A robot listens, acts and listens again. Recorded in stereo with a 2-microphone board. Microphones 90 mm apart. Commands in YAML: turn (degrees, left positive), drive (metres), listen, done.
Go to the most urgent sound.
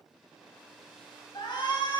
turn: 55
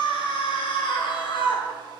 turn: 70
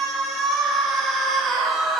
drive: 1.0
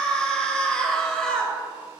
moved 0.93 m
turn: 10
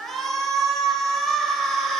drive: 1.0
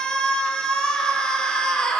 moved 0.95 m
turn: 10
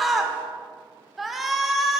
drive: 1.0
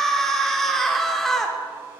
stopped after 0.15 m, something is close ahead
done: "Arrived at the shout, straight ahead."